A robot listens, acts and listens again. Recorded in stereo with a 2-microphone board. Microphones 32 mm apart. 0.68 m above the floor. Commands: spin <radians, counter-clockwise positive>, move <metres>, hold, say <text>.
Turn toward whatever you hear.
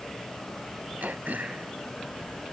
spin -1.22
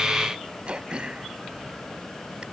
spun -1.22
spin -0.61
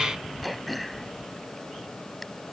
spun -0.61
say Facing the throat clearing.